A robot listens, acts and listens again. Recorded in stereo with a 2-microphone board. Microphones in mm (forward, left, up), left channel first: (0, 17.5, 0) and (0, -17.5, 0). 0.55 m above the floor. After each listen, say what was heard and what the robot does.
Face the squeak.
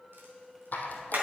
The squeak: about 55° left or 125° left. Turn 55° left.
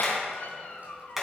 Keep listening.
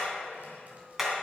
Keep listening.
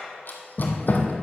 So it is at 65° left. Turn 65° left.
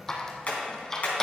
The squeak is now 15° left. Turn 15° left.
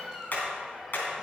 Keep listening.
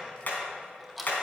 Facing the squeak, 1 to 2 m away.